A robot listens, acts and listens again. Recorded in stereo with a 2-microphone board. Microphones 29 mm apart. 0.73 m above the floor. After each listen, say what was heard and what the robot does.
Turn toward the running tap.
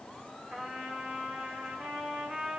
Keep listening.
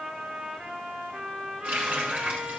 The running tap: about 65° right or 115° right. Turn 65° right.
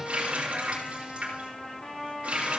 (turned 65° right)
So it is at 50° right. Turn 50° right.
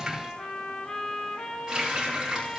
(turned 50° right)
The running tap is now 15° right. Turn 15° right.
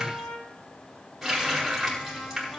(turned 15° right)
Found it: a running tap, straight ahead.